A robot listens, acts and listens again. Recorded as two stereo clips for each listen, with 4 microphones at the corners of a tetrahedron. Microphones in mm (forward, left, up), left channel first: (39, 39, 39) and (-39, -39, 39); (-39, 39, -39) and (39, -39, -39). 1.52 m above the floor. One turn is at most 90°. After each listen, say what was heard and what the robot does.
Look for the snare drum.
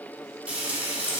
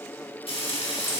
Keep listening.
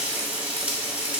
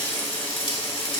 Keep listening.
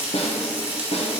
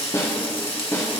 The snare drum: 70° left. Turn 70° left.
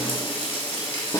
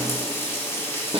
The snare drum is now 10° right. Turn 10° right.
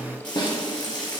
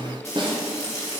Found it: a snare drum, straight ahead.